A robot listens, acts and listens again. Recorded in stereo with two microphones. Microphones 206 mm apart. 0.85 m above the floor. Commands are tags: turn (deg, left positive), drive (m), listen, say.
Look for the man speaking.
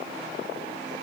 <listen/>
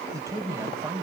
<turn deg="-30"/>
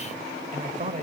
<turn deg="-145"/>
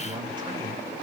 <listen/>
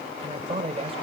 <turn deg="-25"/>
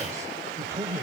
<turn deg="-15"/>
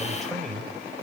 <say>Found it: a man speaking, straight ahead, 2 to 4 m away.</say>